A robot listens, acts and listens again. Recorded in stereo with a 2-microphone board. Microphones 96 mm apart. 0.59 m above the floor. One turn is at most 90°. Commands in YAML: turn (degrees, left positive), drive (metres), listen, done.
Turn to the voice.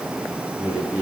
turn: -30
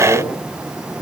turn: 20
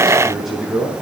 done: "Found it: a man speaking, straight ahead, over 4 m away."